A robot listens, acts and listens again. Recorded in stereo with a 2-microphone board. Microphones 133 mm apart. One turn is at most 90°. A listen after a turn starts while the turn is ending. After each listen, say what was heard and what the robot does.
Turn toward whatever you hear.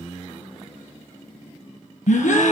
Turn 90° left.
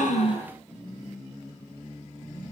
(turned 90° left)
I heard a gasp from this way, but can't make it out now.